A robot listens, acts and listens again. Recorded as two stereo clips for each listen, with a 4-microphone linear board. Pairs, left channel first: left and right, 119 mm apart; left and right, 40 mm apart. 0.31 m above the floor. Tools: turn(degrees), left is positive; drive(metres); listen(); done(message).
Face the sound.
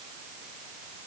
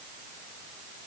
listen()
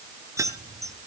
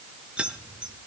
turn(degrees=-25)
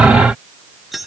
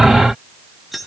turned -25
done("Facing the keys jangling, 2 to 4 m away.")